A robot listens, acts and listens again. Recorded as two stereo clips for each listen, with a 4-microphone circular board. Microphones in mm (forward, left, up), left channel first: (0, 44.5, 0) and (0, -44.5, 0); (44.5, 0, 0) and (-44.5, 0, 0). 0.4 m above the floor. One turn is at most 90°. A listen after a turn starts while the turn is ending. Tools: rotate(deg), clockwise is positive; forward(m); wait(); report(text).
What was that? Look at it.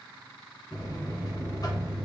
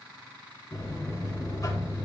rotate(-50)
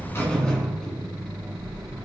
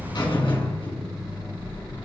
rotate(-10)
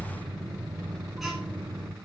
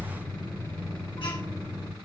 report("Facing the buzzer.")